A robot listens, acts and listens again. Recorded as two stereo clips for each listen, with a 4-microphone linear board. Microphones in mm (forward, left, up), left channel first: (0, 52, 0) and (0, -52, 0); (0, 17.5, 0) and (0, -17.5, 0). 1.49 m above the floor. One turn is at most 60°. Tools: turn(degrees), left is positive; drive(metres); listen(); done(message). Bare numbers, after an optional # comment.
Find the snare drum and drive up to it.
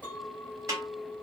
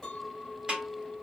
# The snare drum: about 30° right or 150° right.
turn(-30)
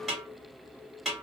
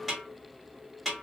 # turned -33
drive(1.0)
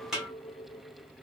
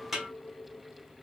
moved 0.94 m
drive(1.0)
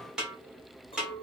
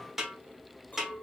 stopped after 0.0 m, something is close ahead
# The snare drum is now 10° right.
turn(-10)
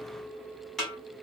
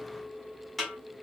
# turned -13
done("I am next to the snare drum.")